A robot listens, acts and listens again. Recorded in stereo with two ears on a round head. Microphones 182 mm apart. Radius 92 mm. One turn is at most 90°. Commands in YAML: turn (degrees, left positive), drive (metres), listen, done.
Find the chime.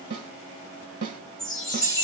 turn: 30
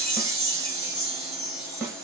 turn: -30
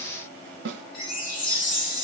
turn: 25
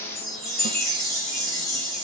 done: "Found it: a chime, straight ahead."